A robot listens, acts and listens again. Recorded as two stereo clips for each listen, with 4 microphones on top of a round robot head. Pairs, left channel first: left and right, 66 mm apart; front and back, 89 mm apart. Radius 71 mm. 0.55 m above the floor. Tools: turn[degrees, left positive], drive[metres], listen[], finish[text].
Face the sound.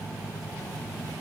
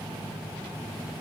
Action: listen[]
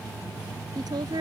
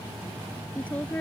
Thought: The woman speaking: 75° right.
Action: turn[-75]
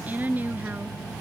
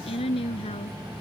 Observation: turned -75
Thought: The woman speaking is now 30° right.
Action: turn[-30]
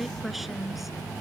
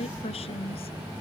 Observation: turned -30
Action: finish[Found it: a woman speaking, straight ahead.]